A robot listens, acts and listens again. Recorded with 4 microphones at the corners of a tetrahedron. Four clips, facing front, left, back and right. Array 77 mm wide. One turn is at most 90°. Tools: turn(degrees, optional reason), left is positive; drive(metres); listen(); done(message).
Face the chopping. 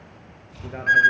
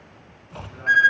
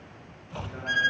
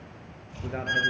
turn(degrees=90, reason="The chopping: 140° left.")
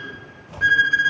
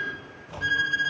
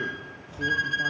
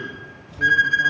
turn(degrees=50, reason="The chopping is now 50° left.")
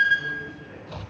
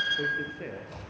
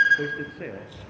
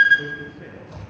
done("Facing the chopping, 2 to 4 m away.")